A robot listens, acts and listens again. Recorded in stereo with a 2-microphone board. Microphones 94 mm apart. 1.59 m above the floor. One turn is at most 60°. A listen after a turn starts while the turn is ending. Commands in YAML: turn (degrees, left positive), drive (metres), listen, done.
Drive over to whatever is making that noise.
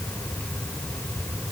listen: true
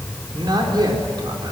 turn: -55
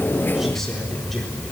listen: true
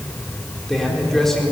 drive: 1.0
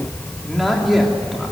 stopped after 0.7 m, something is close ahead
done: "Something is in my way. I am facing the man speaking but have not reached it."